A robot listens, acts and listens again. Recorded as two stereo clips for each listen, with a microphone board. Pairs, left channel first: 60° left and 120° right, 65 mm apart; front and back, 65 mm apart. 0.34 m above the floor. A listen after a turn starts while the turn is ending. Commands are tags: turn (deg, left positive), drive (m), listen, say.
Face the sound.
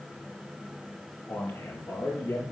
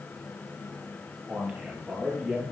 <turn deg="95"/>
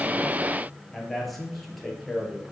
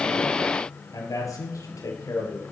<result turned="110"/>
<turn deg="-35"/>
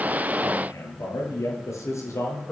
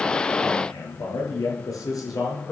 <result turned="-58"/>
<turn deg="20"/>
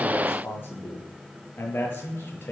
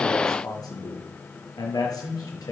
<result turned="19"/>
<say>Found it: a man speaking, straight ahead.</say>